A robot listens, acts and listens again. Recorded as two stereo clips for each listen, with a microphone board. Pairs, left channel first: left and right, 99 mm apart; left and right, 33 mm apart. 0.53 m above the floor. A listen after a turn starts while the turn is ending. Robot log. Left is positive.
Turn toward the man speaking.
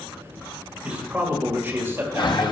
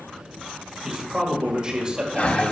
note: The man speaking: about 25° right or 155° right.
cmd yaw -25
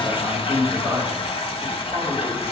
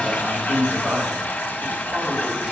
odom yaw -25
note: The man speaking: about 20° right or 160° right.
cmd yaw -20
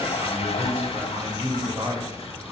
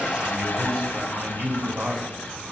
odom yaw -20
note: The man speaking: about 25° right or 155° right.
cmd yaw -25
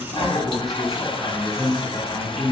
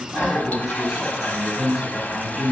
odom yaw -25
end: Found it: a man speaking, straight ahead, 2 to 4 m away.